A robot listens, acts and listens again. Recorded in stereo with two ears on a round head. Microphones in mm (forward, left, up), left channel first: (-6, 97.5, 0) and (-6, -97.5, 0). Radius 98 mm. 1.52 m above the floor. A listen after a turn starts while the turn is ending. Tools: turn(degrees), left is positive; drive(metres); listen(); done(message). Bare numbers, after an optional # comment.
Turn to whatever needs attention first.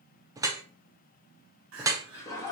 # The crying: about 60° right or 120° right.
turn(-60)
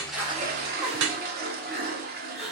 done("Facing the crying.")